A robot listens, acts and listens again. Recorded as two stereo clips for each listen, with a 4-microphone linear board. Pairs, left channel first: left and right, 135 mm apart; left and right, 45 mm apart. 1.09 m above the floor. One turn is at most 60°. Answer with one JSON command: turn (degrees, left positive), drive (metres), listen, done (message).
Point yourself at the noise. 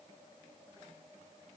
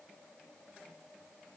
{"listen": true}
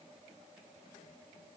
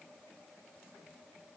{"listen": true}
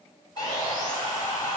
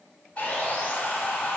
{"turn": 30}
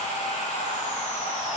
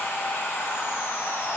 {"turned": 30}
{"turn": 60}
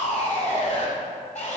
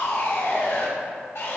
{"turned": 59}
{"turn": 60}
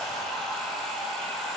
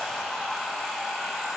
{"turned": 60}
{"done": "Facing the sawing."}